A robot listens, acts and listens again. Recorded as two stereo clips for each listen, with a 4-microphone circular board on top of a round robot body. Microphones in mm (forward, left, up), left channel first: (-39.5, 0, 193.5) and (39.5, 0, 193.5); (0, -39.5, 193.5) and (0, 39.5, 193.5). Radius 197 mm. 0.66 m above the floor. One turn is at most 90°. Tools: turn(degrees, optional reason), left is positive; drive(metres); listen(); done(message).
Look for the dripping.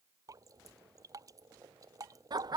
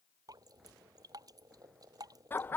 turn(degrees=45, reason="The dripping: 45° left.")
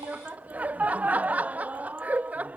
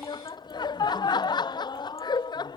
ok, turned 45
listen()
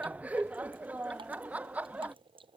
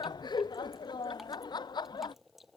done("Found it: dripping, straight ahead.")